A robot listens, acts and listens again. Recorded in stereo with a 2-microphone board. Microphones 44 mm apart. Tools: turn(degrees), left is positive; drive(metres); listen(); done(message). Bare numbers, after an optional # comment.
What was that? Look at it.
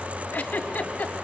# The giggle: about 40° left or 140° left.
turn(40)
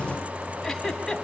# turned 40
done("Facing the giggle, 1 to 2 m away.")